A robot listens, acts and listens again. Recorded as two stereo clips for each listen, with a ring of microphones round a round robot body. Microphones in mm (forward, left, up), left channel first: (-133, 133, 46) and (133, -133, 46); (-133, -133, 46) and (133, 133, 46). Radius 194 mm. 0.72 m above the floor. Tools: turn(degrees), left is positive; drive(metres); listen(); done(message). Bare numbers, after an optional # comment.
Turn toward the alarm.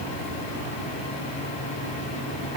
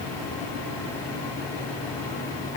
listen()
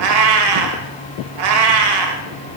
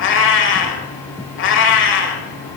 listen()
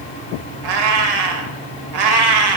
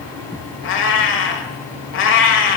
done("I can't make out an alarm, only a cat meowing.")